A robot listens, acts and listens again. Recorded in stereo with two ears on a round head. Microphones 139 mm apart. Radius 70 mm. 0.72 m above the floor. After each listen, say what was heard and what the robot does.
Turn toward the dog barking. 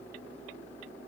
Keep listening.
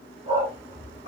The dog barking: about 40° right or 140° right. Turn 40° right.
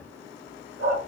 So it is at 100° right. Turn 100° right.
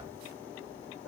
Found it: a dog barking, straight ahead.